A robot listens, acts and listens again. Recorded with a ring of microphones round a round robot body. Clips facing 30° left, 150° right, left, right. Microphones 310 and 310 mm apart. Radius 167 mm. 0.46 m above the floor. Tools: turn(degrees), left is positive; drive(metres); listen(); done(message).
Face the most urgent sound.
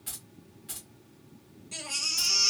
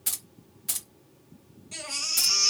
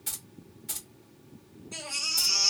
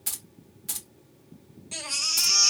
turn(degrees=-55)
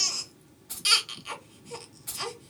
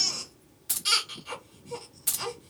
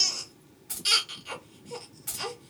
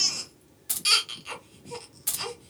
turn(degrees=-15)
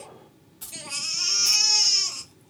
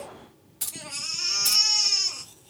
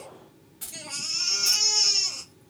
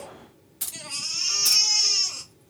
done("Facing the baby crying.")